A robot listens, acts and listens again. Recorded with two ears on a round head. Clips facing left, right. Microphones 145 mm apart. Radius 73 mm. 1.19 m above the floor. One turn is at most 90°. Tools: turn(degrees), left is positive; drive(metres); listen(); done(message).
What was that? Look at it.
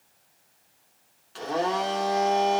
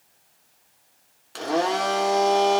turn(degrees=-65)
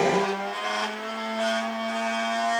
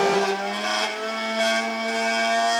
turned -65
turn(degrees=-50)
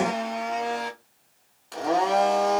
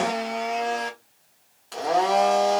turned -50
done("Facing the blender, 1 to 2 m away.")